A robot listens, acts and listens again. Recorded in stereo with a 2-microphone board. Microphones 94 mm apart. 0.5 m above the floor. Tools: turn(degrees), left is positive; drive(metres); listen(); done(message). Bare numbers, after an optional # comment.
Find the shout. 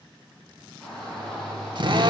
turn(30)
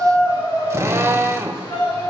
# So it is at 145° left.
turn(145)
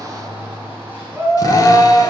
# The shout is now 25° right.
turn(-25)
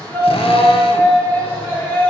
# The shout is now 25° left.
turn(25)
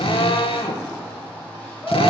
# The shout is now 15° left.
turn(15)
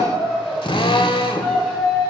done("Found it: a shout, straight ahead.")